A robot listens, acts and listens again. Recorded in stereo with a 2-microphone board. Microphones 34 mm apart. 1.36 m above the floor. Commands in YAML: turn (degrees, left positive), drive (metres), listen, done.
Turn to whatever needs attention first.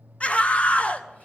turn: 40
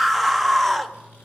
done: "Facing the scream."